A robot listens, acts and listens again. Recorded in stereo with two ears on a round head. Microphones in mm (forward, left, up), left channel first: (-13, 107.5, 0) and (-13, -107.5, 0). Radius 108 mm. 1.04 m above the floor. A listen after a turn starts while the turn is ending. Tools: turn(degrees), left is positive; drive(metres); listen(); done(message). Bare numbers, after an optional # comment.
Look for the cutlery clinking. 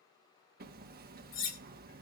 # The cutlery clinking: about 65° left or 115° left.
turn(65)
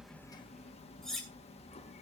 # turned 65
done("Found it: cutlery clinking, straight ahead.")